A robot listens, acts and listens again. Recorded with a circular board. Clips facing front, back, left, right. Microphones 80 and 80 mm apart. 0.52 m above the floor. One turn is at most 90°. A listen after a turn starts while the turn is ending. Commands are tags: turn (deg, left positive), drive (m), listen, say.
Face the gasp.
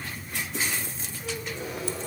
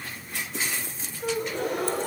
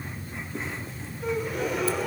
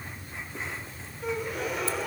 <turn deg="90"/>
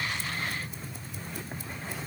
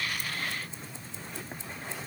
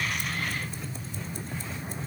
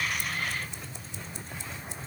<turn deg="90"/>
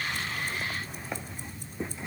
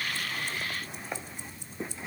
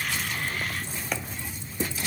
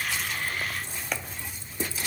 <say>I heard a gasp from this way, but can't make it out now.</say>